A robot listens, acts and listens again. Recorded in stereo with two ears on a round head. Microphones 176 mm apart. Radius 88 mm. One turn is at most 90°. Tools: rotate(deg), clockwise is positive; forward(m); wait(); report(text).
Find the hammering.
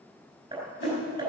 rotate(20)
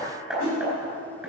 report("Found it: hammering, straight ahead.")